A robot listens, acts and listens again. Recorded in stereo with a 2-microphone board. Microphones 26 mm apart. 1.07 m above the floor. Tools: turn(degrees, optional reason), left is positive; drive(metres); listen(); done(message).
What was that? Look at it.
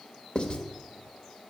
turn(degrees=45, reason="The writing: about 45° left or 135° left.")
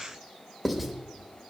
done("Found it: writing, straight ahead.")